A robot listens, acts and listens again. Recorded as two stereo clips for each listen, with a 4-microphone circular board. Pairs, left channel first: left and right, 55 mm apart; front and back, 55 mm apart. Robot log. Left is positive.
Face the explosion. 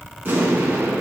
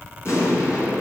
note: The explosion: 35° right.
cmd yaw -35
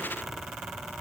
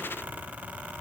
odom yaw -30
end: I heard an explosion from this way, but can't make it out now.